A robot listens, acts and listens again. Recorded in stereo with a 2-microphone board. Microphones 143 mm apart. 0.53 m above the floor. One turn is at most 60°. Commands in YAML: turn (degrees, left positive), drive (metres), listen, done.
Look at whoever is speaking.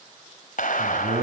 turn: -60
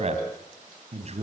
turn: -50
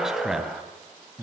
done: "Found it: a man speaking, straight ahead, 2 to 4 m away."